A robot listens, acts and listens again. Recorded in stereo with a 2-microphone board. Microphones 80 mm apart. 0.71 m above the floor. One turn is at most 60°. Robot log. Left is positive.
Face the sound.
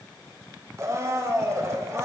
note: The blender: about 35° right or 145° right.
cmd yaw -35
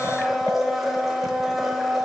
end: Facing the blender, 1 to 2 m away.